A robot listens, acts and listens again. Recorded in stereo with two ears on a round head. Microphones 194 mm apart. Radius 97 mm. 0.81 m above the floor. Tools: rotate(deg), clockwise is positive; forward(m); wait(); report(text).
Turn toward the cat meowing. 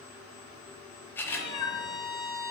rotate(-90)
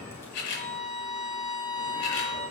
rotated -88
wait()
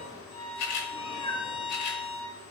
rotate(-20)
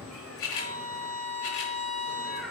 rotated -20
report("Facing the cat meowing, over 4 m away.")